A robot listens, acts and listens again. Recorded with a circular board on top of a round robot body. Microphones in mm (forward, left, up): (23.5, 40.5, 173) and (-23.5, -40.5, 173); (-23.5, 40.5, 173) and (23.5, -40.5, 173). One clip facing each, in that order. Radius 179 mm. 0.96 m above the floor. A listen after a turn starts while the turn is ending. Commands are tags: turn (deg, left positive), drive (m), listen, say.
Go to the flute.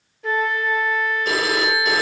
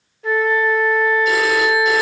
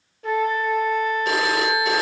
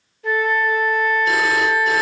<turn deg="150"/>
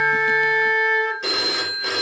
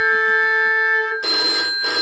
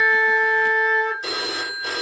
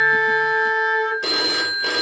<turn deg="10"/>
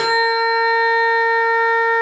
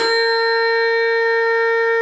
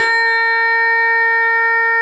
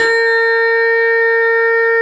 <drive m="1.0"/>
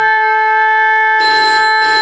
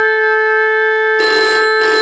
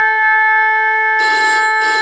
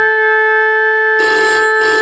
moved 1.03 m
<turn deg="15"/>
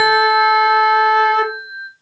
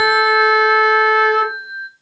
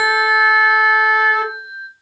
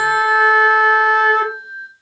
<drive m="1.0"/>
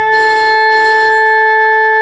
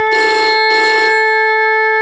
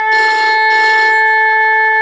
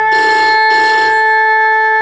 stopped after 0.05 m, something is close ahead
<say>Arrived at the flute, straight ahead.</say>